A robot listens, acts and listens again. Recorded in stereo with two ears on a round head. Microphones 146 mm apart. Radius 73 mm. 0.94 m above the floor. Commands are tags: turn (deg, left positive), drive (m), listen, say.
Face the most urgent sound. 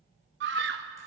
<turn deg="-70"/>
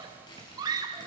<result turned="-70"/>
<turn deg="-25"/>
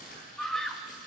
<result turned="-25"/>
<say>Facing the scream.</say>